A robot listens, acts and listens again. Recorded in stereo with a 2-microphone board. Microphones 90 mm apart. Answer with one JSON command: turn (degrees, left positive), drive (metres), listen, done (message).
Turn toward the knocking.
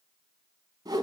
{"listen": true}
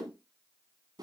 {"listen": true}
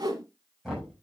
{"turn": 30}
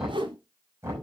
{"turn": -30}
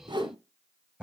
{"turn": -15}
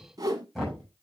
{"done": "Found it: knocking, straight ahead, over 4 m away."}